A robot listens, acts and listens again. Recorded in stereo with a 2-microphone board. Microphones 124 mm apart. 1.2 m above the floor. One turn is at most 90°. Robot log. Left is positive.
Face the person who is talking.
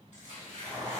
cmd idle
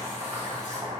cmd idle
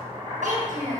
cmd yaw -90
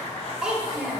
note: So it is at 10° right.
cmd yaw -10
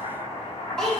end: Facing the child speaking.